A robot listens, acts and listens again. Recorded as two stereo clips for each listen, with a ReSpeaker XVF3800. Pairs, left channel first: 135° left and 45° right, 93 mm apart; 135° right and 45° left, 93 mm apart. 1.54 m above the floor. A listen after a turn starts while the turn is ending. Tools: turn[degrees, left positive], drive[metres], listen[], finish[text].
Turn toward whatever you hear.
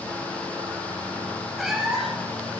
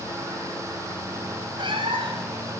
Thought: The cat meowing: 45° left.
Action: turn[45]
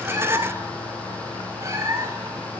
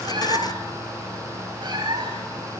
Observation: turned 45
Thought: The cat meowing is now 15° left.
Action: turn[15]
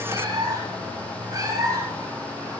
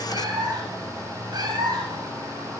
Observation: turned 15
Action: finish[Facing the cat meowing.]